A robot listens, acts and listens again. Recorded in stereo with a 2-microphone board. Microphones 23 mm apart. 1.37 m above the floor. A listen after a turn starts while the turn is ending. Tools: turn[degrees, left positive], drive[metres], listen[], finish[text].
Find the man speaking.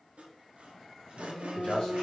Thought: The man speaking: about 40° left or 140° left.
Action: turn[40]
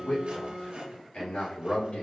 Thought: So it is at 115° left.
Action: turn[115]
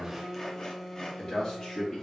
Thought: The man speaking is now 40° left.
Action: turn[40]
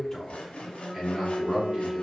Thought: The man speaking is now 10° right.
Action: turn[-10]
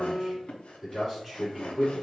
Action: finish[Found it: a man speaking, straight ahead.]